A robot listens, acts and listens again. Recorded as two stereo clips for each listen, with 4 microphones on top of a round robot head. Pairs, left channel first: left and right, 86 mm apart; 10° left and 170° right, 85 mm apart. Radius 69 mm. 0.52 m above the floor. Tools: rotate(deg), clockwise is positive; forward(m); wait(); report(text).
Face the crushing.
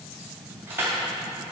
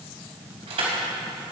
rotate(160)
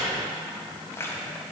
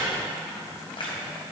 rotate(-30)
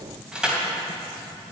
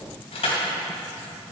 rotate(10)
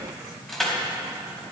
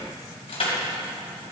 report("Found it: crushing, straight ahead.")